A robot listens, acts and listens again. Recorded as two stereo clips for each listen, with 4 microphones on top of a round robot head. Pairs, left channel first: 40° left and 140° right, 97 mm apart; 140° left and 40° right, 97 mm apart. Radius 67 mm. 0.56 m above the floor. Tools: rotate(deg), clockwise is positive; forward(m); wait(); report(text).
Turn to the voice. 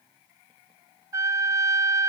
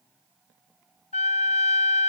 wait()
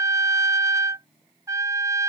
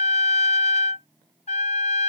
wait()
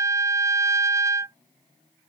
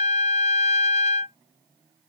report("I can't make out anyone speaking, only a trumpet.")